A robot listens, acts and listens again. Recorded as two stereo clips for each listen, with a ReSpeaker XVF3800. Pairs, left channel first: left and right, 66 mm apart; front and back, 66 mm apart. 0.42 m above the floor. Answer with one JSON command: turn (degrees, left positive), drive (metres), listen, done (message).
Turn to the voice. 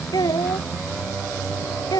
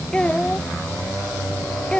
{"turn": 75}
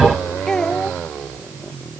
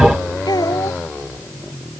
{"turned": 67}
{"turn": 10}
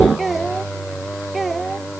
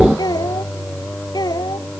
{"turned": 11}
{"done": "Facing the child speaking."}